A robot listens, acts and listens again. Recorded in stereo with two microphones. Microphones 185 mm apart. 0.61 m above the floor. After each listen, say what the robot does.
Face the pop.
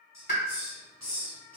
Turn 70° left.
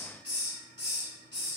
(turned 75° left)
Keep listening.
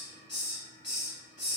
I heard a pop, but can't make it out now. It was about 5° right or 35° left.